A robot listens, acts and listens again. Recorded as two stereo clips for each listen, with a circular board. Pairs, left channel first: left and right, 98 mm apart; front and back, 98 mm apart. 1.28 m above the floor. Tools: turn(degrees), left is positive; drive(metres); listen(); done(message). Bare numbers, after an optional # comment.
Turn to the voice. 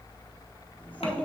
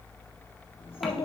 # The child speaking: 15° left.
turn(15)
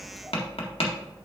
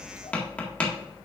listen()
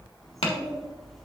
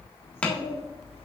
done("Facing the child speaking.")